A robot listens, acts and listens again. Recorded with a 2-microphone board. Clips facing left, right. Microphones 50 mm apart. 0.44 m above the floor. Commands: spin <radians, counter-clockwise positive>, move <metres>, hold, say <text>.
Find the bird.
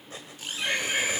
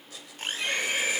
spin 0.70
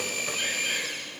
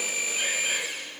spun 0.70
hold
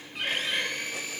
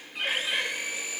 say Facing the bird.